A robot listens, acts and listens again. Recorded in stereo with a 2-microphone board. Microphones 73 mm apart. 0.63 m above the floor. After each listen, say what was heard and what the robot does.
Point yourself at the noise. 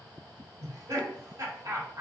The laughter: about 45° right or 135° right. Turn 45° right.
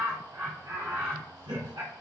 So it is at 85° right. Turn 85° right.
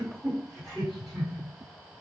Found it: laughter, straight ahead, 1 to 2 m away.